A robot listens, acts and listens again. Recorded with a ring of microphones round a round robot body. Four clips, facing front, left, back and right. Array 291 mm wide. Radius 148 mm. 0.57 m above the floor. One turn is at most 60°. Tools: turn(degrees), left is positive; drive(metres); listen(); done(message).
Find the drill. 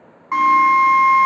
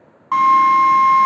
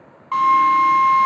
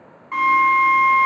turn(degrees=60)
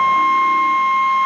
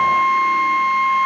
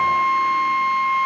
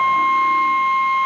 turn(degrees=40)
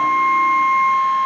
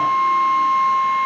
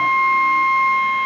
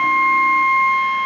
turn(degrees=20)
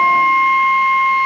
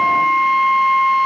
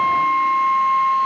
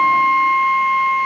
done("Facing the drill.")